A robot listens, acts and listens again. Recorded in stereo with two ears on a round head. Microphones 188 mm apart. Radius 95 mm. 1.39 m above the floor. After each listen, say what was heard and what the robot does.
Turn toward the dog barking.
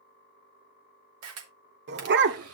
The dog barking: about 55° right or 125° right. Turn 55° right.
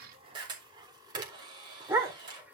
So it is at 10° right. Turn 10° right.
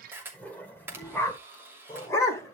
The dog barking is now 15° left. Turn 15° left.
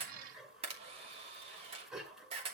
Facing the dog barking, 2 to 4 m away.